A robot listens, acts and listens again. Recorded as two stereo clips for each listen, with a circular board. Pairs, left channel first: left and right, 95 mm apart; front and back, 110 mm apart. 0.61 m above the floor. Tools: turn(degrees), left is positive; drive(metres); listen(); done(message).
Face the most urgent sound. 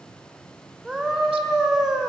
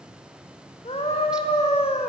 done("Found it: a scream, straight ahead.")